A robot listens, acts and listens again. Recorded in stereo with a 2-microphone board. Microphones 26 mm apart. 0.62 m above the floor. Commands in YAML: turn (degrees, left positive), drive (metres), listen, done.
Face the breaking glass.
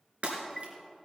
turn: -55
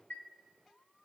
listen: true
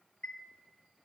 done: "I heard breaking glass, but can't make it out now. It was about straight ahead or 70° right."